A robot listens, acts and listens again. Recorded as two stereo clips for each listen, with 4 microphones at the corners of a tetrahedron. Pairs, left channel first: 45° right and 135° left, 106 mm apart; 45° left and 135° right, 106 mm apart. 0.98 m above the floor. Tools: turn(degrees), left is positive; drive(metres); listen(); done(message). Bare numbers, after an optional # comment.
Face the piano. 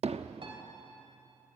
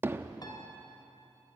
# The piano: 100° left.
turn(100)
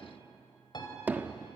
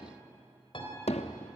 done("Facing the piano, 2 to 4 m away.")